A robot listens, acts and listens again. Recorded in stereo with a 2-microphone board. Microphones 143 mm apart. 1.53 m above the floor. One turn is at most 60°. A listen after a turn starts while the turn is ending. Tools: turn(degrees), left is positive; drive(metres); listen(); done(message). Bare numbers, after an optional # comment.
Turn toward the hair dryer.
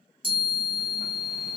listen()
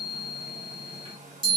# The hair dryer: about 60° right or 120° right.
turn(-60)
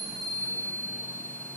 listen()
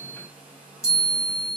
# So it is at 15° right.
turn(-15)
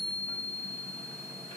listen()
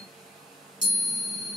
done("Facing the hair dryer.")